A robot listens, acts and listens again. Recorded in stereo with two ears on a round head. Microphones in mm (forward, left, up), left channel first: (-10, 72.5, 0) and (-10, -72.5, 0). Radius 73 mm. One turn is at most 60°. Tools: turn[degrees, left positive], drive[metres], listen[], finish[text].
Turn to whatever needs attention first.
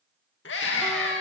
Action: turn[60]
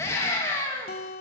Thought: So it is at 20° left.
Action: turn[20]
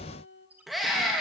Action: finish[Found it: a scream, straight ahead, 2 to 4 m away.]